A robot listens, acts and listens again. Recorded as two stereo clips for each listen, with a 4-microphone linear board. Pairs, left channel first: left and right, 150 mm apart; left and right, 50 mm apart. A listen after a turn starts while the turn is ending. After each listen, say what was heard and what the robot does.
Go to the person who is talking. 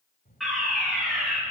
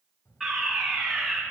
Turn 90° left.
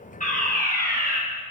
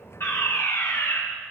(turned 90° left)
Keep listening.
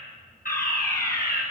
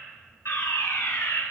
Keep listening.
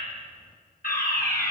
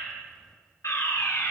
Facing where the child speaking came from. I can't hear it now. I did not reach it.